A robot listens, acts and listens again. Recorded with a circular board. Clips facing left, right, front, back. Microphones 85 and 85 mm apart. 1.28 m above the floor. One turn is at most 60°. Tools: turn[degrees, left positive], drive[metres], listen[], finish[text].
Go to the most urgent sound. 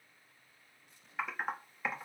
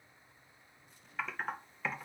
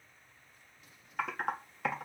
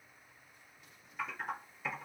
Action: listen[]
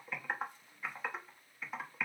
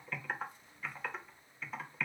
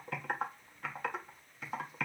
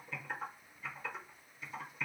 Action: listen[]
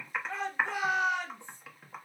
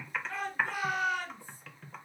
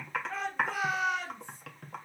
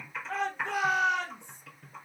Thought: The shout: 160° left.
Action: turn[60]
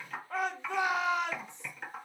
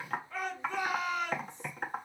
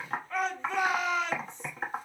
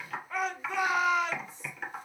Thought: The shout is now 95° left.
Action: turn[60]
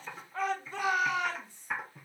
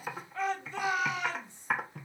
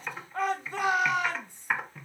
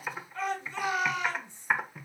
Thought: The shout is now 40° left.
Action: turn[40]
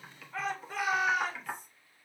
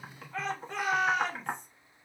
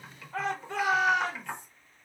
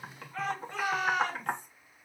Action: drive[1.0]
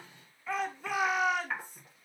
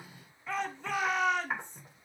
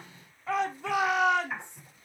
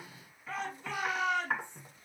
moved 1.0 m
Action: drive[1.0]
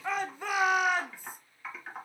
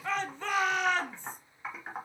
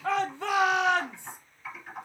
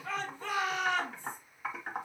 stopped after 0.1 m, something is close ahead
Thought: The shout is now 10° left.
Action: turn[10]
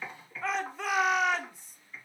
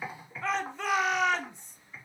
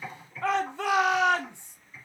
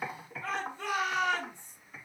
Action: finish[I am next to the shout.]